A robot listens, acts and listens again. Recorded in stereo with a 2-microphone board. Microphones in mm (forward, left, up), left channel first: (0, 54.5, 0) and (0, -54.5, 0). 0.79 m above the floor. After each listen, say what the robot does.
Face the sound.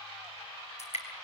Turn 90° left.
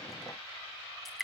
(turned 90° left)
Facing the dripping, over 4 m away.